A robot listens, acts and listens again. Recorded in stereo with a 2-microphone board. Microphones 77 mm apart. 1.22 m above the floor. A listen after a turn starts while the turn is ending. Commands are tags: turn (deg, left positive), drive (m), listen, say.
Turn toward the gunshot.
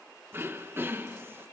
<listen/>
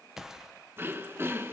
<turn deg="-30"/>
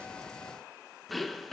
<listen/>
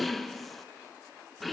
<say>I heard a gunshot, but can't make it out now. It was about 25° left or 145° right.</say>